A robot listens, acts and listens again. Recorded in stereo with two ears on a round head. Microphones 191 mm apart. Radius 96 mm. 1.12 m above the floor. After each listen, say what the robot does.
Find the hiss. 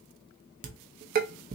Keep listening.
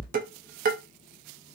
Keep listening.
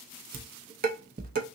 I can't make out a hiss to turn to.